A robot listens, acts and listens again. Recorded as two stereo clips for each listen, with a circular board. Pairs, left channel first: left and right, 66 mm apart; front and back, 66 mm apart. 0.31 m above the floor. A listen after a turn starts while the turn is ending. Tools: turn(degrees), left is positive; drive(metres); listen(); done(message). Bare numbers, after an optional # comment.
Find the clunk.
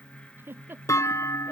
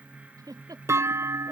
# The clunk: 130° left.
turn(130)
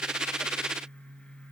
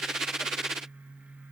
done("Facing where the clunk came from. I can't hear it now.")